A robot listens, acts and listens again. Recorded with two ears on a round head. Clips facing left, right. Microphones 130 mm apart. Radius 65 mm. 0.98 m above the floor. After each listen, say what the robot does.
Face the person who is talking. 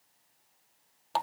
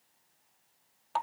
Keep listening.
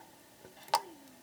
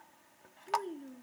Turn 50° right.
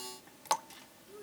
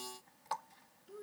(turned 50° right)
Found it: a child speaking, straight ahead.